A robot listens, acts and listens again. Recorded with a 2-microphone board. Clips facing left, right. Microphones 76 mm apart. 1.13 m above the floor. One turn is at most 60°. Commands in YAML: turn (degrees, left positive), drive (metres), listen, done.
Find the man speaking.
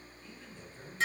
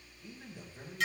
turn: -30
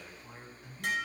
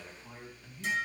turn: 15
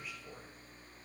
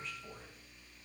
done: "Found it: a man speaking, straight ahead."